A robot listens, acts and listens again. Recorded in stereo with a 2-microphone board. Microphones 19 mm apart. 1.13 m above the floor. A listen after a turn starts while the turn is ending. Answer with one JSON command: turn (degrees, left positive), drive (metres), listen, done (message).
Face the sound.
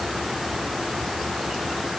{"listen": true}
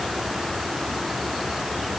{"listen": true}
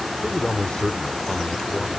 {"turn": 90}
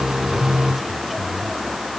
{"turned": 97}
{"listen": true}
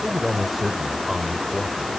{"done": "Facing the man speaking."}